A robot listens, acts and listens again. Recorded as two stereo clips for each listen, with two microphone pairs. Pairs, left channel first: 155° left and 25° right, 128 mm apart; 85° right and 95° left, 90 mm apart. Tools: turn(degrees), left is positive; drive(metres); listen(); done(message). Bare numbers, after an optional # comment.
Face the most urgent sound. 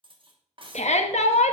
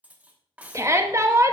# The shout: 150° left.
turn(150)
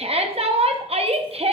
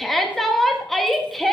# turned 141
done("Facing the shout.")